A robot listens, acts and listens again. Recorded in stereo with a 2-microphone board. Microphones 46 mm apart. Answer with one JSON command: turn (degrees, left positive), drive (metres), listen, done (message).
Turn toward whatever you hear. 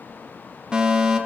{"turn": -15}
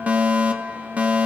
{"turn": -150}
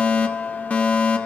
{"turn": 35}
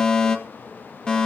{"turn": 20}
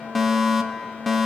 {"done": "Found it: a fire alarm, straight ahead."}